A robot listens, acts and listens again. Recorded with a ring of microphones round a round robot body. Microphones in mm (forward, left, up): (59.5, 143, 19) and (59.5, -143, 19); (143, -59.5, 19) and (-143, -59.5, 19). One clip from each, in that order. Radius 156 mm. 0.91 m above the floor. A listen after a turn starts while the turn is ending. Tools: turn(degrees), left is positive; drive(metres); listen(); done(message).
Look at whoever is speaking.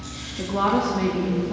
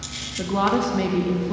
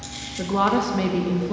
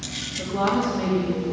turn(degrees=-25)
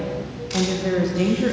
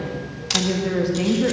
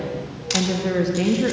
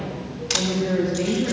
done("Facing the woman speaking, 1 to 2 m away.")